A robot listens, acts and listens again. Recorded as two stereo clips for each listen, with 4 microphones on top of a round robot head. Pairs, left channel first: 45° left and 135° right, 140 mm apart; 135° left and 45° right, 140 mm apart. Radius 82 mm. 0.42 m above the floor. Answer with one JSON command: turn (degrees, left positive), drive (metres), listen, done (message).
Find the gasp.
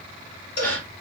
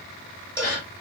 {"turn": 125}
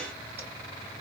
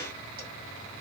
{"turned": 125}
{"done": "I heard a gasp from this way, but can't make it out now."}